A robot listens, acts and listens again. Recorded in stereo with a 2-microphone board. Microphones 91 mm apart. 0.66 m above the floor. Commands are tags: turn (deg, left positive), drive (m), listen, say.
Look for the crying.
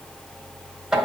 <listen/>
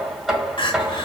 <turn deg="70"/>
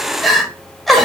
<say>Facing the crying, 1 to 2 m away.</say>